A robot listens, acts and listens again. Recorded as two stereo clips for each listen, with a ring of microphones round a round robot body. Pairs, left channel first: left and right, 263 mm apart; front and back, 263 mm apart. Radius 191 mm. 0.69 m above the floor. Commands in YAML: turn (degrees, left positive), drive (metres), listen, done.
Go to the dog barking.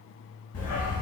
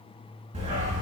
turn: 120
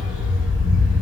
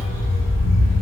drive: 1.0
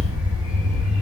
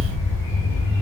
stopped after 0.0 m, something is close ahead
done: "Blocked. The dog barking is further on, straight ahead."